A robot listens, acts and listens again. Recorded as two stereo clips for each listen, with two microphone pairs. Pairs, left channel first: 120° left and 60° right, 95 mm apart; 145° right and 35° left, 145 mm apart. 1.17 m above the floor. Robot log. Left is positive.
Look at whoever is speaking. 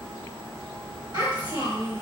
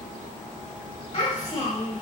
note: The child speaking: 95° right.
cmd yaw -95
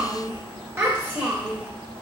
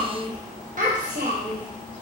note: The child speaking is now 15° left.
cmd yaw +15
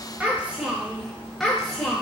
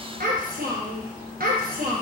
note: The child speaking is now 40° left.
cmd yaw +40
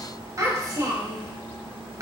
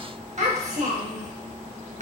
end: Found it: a child speaking, straight ahead, 1 to 2 m away.